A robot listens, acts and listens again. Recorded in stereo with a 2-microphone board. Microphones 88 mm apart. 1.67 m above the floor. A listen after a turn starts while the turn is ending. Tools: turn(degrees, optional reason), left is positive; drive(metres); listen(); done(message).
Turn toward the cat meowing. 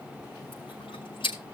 listen()
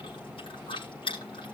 listen()
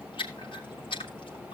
done("I can't make out a cat meowing, only chewing.")